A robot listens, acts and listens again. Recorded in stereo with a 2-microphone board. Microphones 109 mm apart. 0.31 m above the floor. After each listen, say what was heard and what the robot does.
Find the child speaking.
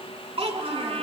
The child speaking: about 65° right or 115° right. Turn 65° right.
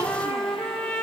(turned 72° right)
Keep listening.
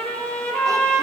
Keep listening.
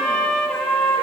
I heard a child speaking, but can't make it out now. It was about 10° left or 45° right.